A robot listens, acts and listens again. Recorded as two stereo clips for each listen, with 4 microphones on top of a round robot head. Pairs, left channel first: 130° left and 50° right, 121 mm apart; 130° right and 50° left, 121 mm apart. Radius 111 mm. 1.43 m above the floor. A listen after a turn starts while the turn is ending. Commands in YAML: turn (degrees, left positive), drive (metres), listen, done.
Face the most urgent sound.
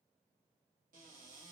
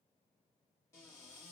listen: true
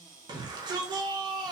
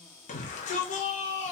turn: -105
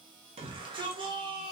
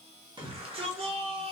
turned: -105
done: "Facing the shout."